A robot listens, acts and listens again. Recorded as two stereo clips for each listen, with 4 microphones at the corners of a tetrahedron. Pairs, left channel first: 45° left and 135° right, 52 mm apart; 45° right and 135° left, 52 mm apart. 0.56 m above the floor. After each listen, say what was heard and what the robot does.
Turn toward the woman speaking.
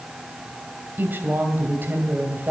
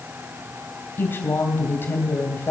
The woman speaking: 90° right. Turn 90° right.
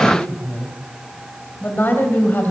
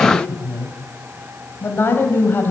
Facing the woman speaking, 2 to 4 m away.